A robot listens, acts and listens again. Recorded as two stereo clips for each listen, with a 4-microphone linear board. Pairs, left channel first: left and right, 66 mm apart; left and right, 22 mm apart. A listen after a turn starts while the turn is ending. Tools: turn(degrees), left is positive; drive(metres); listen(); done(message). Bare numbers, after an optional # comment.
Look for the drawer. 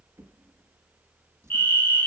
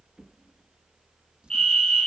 # The drawer: about 40° right or 140° right.
turn(-40)
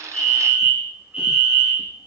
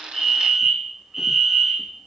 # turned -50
listen()
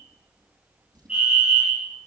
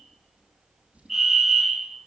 # So it is at 90° right.
turn(-90)
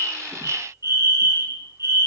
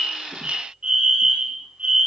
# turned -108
# Nothing new. It was at 20° left.
turn(20)
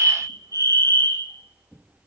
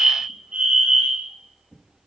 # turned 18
done("Found it: a drawer, straight ahead, over 4 m away.")